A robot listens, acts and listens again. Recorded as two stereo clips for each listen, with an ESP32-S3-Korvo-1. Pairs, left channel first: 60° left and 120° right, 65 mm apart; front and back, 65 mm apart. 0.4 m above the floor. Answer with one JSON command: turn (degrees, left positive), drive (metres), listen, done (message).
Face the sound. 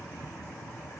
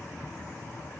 {"listen": true}
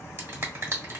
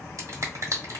{"turn": -160}
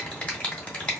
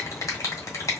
{"done": "Found it: a finger snap, straight ahead."}